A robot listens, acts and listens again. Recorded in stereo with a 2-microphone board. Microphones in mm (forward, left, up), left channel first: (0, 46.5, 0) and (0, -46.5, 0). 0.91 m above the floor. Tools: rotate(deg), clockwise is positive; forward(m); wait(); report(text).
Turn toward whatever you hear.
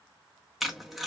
rotate(-30)
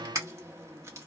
rotate(35)
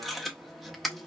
report("Facing the tape being pulled.")